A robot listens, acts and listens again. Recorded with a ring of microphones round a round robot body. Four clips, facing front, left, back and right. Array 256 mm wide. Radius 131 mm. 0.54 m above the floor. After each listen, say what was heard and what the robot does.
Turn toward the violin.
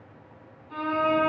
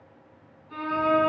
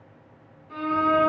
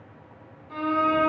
The violin: 135° right. Turn 135° right.
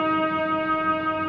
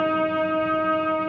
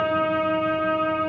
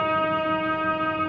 The violin is now 15° right. Turn 15° right.
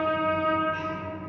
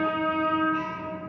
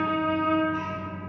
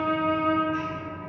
Found it: a violin, straight ahead.